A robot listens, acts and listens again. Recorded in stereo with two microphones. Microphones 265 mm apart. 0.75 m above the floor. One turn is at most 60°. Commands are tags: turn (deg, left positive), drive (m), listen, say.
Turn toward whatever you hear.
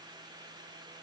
<listen/>
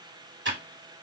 <turn deg="-45"/>
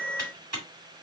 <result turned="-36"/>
<turn deg="-60"/>
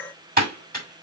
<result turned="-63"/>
<turn deg="-35"/>
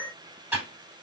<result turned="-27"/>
<turn deg="-10"/>
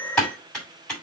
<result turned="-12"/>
<say>Found it: typing on a keyboard, straight ahead.</say>